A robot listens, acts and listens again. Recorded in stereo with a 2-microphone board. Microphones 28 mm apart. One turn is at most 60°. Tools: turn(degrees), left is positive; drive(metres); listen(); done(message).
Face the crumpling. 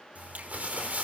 turn(degrees=-60)
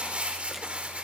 turn(degrees=-50)
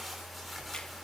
done("Found it: crumpling, straight ahead.")